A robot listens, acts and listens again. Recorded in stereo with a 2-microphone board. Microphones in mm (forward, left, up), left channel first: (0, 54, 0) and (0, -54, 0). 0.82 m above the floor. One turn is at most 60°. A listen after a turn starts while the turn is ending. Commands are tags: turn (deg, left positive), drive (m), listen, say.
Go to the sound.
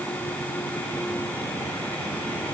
<listen/>
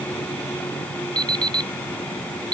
<turn deg="-40"/>
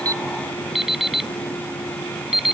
<drive m="1.0"/>
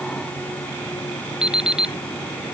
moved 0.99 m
<drive m="1.0"/>
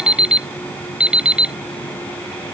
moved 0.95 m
<turn deg="-10"/>
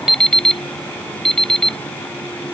<drive m="1.0"/>
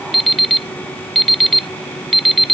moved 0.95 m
<drive m="1.0"/>
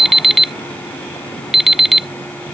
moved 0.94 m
<drive m="1.0"/>
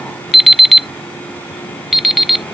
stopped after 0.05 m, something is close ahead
<say>I am next to the alarm clock.</say>